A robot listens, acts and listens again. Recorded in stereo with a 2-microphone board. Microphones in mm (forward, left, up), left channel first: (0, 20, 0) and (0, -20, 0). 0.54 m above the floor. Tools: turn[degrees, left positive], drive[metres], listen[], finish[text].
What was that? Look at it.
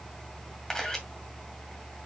Action: turn[30]
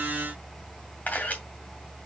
Thought: So it is at 135° left.
Action: turn[135]
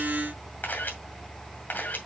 Thought: The camera shutter is now 50° left.
Action: turn[50]
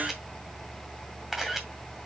Thought: The camera shutter is now 10° right.
Action: turn[-10]
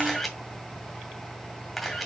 Action: finish[Facing the camera shutter, 2 to 4 m away.]